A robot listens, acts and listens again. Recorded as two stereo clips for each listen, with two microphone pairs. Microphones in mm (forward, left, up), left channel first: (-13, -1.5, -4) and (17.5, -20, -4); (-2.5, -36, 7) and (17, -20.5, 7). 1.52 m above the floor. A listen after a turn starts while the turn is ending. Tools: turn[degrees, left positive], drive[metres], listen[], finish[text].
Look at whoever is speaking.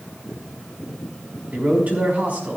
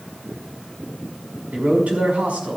Thought: The man speaking: 15° left.
Action: turn[15]
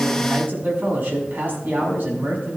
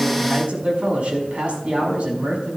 Action: finish[Facing the man speaking, over 4 m away.]